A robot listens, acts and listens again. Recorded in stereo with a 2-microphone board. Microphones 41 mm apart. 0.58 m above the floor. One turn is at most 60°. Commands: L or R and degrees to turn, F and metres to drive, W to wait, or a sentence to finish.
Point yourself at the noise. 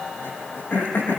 L60
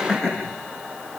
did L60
L40
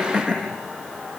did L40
Facing the throat clearing.